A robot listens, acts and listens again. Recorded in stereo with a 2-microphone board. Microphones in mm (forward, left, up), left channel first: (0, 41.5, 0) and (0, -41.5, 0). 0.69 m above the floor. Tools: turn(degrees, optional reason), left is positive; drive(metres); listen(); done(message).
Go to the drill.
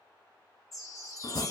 listen()
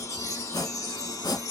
listen()
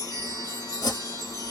done("I can't make out a drill, only chopping and a chime.")